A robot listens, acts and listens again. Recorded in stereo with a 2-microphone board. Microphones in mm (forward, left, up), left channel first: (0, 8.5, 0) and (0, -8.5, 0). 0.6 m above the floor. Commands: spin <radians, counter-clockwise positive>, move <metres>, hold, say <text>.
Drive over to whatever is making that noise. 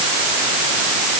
hold
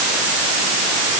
hold
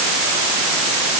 say I can't make out anything.